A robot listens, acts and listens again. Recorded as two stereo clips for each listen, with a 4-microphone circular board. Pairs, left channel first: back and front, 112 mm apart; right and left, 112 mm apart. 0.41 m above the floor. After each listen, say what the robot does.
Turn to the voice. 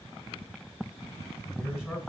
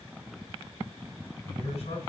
Turn 85° right.
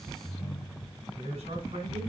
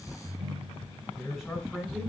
Found it: a man speaking, straight ahead.